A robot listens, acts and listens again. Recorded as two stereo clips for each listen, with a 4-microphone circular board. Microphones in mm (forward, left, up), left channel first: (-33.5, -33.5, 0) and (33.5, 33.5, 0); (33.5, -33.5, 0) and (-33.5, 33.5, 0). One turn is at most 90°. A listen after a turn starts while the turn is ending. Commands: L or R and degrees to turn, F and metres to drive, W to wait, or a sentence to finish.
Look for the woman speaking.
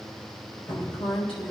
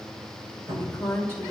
R90
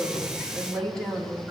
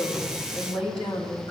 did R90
R55
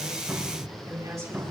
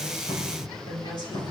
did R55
R10
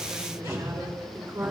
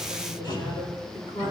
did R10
R10
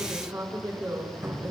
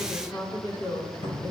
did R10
Facing the woman speaking, 2 to 4 m away.